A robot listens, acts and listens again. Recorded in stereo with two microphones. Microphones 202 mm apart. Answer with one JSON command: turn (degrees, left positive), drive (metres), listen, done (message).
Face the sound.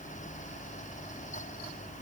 {"listen": true}
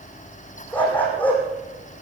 {"turn": 30}
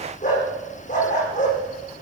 {"turn": 140}
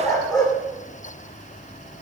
{"turn": 20}
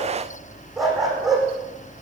{"done": "Found it: a dog barking, straight ahead."}